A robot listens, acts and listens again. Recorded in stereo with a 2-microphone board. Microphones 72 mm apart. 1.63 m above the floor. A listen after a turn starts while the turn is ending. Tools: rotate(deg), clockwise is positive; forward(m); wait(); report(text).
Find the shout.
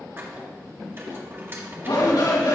rotate(-90)
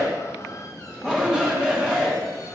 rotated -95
rotate(15)
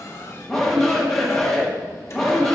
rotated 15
report("Found it: a shout, straight ahead.")